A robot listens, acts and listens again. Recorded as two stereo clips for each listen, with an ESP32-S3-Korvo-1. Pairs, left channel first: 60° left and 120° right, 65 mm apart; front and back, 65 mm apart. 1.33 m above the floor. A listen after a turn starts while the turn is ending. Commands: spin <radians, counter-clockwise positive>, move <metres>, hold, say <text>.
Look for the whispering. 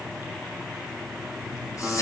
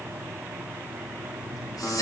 spin 0.44
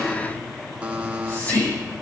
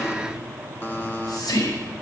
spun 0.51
say Found it: whispering, straight ahead.